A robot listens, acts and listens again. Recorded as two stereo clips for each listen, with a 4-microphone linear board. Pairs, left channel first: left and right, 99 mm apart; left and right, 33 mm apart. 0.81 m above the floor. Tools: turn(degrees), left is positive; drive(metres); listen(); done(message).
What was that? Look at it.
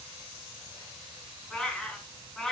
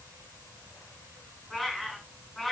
turn(degrees=30)
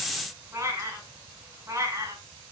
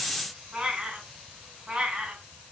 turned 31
turn(degrees=-35)
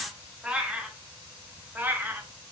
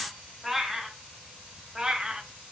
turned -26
turn(degrees=-20)
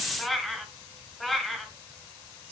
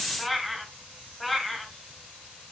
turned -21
done("Facing the cat meowing.")